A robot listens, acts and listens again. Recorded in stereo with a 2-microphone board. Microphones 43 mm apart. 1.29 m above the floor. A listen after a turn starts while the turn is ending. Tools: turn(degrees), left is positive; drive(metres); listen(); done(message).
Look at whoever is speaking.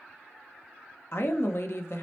turn(degrees=60)
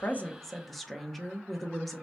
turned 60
done("Facing the woman speaking.")